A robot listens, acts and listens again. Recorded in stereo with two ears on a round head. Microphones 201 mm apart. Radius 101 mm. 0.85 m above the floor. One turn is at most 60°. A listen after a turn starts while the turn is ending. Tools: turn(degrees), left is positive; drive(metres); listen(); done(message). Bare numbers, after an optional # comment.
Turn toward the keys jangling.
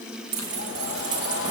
# The keys jangling: about 55° right or 125° right.
turn(-55)
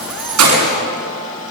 # So it is at 70° right.
turn(-60)
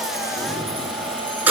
# The keys jangling is now 10° right.
turn(-10)
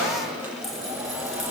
listen()
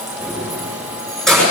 done("Found it: keys jangling, straight ahead.")